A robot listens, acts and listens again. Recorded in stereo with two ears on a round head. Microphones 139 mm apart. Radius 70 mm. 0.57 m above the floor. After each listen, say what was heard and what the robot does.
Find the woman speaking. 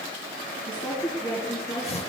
Turn 30° left.
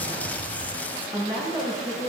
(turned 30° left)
So it is at 35° right. Turn 35° right.
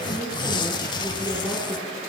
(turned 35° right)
The woman speaking is now 20° right. Turn 20° right.
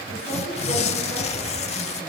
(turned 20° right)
Keep listening.
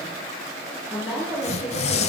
The woman speaking is now 10° right. Turn 10° right.
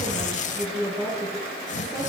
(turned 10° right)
Found it: a woman speaking, straight ahead.